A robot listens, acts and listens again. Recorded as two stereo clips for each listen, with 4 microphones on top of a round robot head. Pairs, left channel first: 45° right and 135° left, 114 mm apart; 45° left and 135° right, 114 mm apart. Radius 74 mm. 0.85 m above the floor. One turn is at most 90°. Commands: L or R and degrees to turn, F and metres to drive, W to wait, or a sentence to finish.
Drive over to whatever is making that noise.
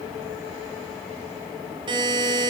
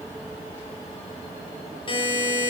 L85
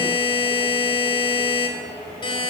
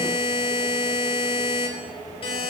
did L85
F1.0
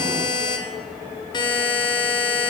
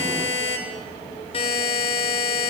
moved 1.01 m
F1.0
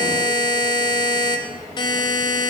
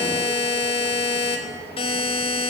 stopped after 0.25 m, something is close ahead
Something is in my way. I am facing the buzzer but have not reached it.